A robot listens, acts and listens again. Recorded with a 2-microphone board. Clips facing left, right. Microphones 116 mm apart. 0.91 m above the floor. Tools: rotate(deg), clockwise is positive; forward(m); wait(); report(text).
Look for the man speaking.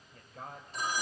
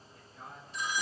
rotate(-90)
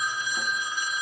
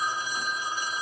wait()
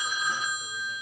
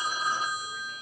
wait()
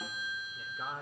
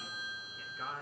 rotate(-20)
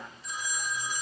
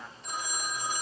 wait()
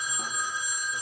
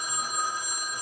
wait()
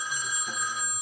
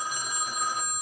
report("Facing where the man speaking came from. I can't hear it now.")